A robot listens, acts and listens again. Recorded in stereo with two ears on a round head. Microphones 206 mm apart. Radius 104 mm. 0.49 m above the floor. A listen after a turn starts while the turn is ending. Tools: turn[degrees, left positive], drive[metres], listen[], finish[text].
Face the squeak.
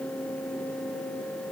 Action: listen[]
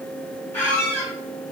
Action: turn[30]
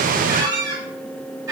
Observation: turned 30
Thought: So it is at 20° right.
Action: turn[-20]
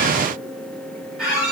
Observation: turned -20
Action: finish[Found it: a squeak, straight ahead.]